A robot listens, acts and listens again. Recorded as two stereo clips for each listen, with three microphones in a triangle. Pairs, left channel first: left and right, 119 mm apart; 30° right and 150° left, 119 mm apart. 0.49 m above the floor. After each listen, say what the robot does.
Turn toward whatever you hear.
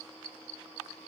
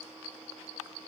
Keep listening.
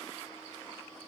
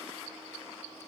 Keep listening.
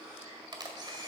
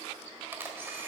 Turn 140° right.
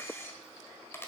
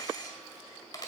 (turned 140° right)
Turn 20° left.
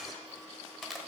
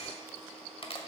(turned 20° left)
Facing the camera shutter.